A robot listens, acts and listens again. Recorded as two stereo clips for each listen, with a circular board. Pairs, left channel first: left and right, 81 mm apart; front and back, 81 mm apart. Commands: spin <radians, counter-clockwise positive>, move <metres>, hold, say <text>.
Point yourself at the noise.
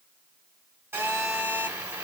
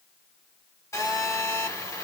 spin -0.70
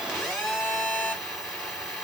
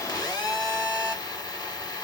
say Found it: a phone buzzing, straight ahead, 1 to 2 m away.